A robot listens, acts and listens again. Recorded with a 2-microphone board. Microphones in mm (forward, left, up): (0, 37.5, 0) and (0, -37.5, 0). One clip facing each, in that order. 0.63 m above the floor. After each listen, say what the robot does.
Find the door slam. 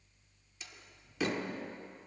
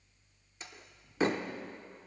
Turn 35° right.
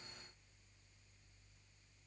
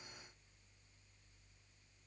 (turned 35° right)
Keep listening.
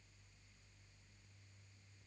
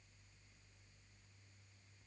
I heard a door slam, but can't make it out now. It was about straight ahead or 110° right.